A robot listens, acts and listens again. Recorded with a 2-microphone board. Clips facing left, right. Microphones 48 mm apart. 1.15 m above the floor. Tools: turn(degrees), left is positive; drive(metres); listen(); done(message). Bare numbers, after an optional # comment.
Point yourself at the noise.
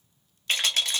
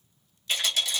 # The rattle: about 50° left or 130° left.
turn(50)
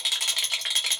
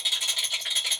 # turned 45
# So it is at 80° left.
turn(80)
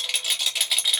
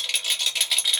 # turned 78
done("Found it: a rattle, straight ahead, under 1 m away.")